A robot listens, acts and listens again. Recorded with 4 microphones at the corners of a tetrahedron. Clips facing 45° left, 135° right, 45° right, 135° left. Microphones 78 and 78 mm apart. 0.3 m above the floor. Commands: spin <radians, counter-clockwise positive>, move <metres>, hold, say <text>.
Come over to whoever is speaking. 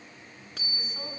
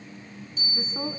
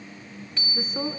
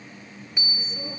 spin -1.31
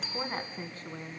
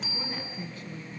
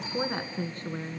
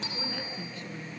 move 1.0
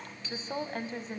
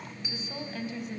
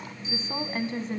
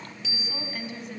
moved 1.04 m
move 1.0
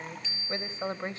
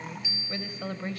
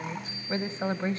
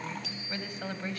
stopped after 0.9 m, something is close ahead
say Arrived at the woman speaking, straight ahead.